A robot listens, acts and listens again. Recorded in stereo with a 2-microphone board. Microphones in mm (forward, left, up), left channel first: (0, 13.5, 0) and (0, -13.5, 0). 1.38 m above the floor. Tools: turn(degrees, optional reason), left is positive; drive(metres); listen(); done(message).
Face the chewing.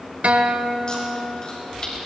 turn(degrees=35, reason="The chewing: about 35° left or 145° left.")
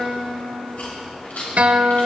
turn(degrees=110, reason="So it is at 110° left.")
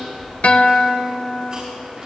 turn(degrees=-30, reason="The chewing is now 30° right.")
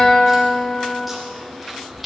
done("Facing the chewing, over 4 m away.")